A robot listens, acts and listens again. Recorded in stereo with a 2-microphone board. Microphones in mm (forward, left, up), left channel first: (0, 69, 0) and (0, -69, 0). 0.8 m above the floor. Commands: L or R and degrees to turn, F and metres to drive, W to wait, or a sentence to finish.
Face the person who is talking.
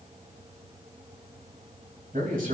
R75
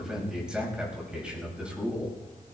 R10
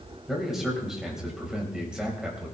Facing the man speaking.